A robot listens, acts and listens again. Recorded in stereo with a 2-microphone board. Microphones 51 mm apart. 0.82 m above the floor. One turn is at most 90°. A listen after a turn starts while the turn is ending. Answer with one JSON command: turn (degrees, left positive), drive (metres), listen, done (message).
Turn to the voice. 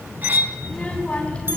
{"turn": 25}
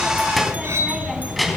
{"done": "Found it: a child speaking, straight ahead."}